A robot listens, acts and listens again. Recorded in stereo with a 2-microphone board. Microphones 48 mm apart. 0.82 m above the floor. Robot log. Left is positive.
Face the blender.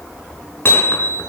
cmd idle
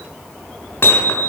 cmd idle
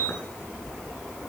end: I can't make out a blender, only hammering.